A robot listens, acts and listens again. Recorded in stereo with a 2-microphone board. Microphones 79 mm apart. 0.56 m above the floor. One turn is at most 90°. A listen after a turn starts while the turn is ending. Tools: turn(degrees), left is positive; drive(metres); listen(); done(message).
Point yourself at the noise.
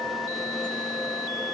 listen()
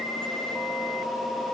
listen()
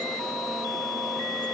done("I can't make out anything to turn to.")